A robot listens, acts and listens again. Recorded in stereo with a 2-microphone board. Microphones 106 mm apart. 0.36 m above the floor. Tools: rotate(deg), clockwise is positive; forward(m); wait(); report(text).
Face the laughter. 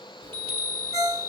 wait()
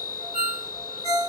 wait()
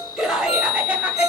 rotate(30)
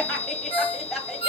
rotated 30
rotate(-30)
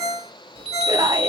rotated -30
rotate(40)
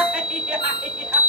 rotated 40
wait()
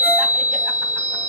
wait()
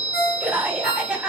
rotate(10)
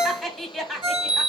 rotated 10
report("Facing the laughter, 2 to 4 m away.")